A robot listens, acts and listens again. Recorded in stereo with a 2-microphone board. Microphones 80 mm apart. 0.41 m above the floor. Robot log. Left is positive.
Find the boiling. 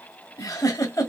cmd idle
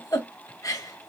cmd idle
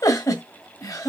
end: I can't make out boiling to turn to.